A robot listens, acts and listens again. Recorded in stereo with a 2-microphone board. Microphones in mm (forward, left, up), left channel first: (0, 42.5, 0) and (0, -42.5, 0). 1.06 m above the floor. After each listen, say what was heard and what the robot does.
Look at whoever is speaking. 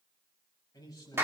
The man speaking: about 45° left or 135° left. Turn 45° left.
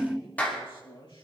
So it is at 85° left. Turn 85° left.
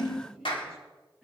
Found it: a man speaking, straight ahead, over 4 m away.